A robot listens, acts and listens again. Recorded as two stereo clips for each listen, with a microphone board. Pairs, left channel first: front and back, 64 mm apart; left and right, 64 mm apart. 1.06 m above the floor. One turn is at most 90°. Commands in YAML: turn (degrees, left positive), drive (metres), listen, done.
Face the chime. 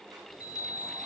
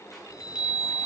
turn: -15
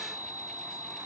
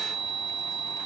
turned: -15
done: "Found it: a chime, straight ahead."